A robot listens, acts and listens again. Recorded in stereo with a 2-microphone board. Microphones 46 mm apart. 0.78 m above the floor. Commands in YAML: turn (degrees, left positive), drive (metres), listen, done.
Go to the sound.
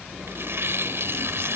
turn: -65
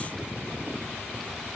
listen: true
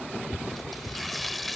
drive: 1.0
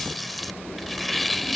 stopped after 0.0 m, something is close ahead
done: "Something is in my way. I am facing the tearing paper but have not reached it."